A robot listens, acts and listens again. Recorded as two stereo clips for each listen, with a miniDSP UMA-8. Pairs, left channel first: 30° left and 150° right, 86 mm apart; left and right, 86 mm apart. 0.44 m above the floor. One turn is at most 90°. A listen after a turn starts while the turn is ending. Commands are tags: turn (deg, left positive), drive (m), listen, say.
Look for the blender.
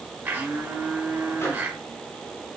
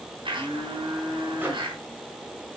<turn deg="-85"/>
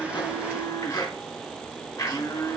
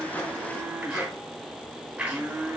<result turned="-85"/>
<turn deg="-15"/>
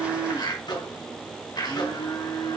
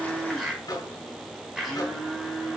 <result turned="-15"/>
<say>Facing the blender.</say>